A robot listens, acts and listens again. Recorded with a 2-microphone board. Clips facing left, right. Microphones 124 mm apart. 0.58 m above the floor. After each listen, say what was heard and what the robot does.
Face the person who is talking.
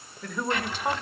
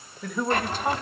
Turn 30° left.
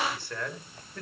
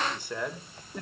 Turn 30° right.
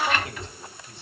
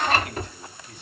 So it is at 30° left. Turn 30° left.
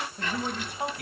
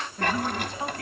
The man speaking is now 15° left. Turn 15° left.
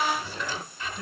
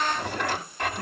Keep listening.
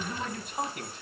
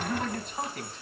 The man speaking is now 10° left. Turn 10° left.
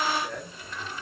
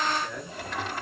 Found it: a man speaking, straight ahead, over 4 m away.